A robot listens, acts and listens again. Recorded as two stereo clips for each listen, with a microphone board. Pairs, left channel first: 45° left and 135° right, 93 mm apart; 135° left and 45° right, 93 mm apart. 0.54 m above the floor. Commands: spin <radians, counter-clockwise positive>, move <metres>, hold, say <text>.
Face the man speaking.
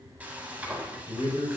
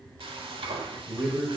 spin 0.44
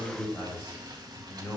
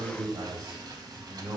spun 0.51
spin -0.26
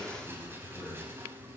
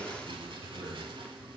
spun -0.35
say Found it: a man speaking, straight ahead.